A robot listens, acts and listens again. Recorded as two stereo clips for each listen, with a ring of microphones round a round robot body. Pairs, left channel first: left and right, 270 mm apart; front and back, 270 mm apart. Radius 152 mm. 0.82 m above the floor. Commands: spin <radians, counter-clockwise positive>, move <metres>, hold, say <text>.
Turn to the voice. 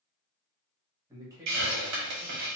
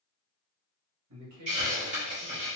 spin -2.88
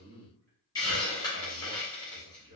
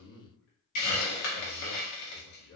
spin -0.70
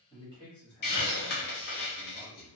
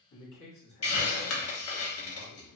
spin -0.35
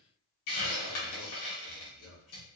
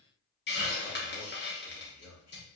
say Facing the man speaking.